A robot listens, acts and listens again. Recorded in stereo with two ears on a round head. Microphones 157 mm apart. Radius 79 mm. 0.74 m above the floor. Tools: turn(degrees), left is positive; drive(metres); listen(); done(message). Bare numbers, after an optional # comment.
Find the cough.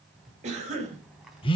# The cough: about 40° right or 140° right.
turn(-40)
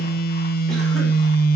listen()
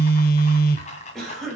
done("Found it: a cough, straight ahead.")